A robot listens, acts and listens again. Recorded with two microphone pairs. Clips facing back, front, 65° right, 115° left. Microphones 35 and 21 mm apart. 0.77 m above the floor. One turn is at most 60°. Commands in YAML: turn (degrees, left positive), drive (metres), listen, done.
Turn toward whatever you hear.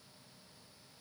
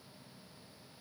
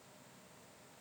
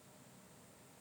listen: true
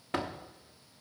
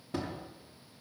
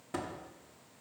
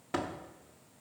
turn: 60
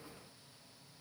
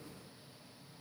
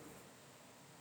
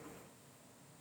turn: 60
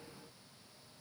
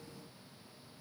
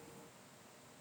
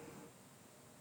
turn: 55
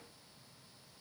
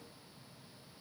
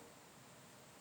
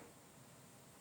done: "I heard a door slam from this way, but can't make it out now."